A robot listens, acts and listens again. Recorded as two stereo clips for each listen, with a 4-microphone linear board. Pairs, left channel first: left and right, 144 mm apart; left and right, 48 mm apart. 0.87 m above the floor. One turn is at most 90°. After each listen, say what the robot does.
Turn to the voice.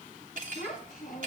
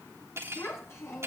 Turn 70° left.
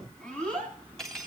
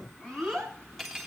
Turn 10° left.
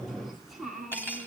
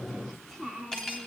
Found it: a child speaking, straight ahead.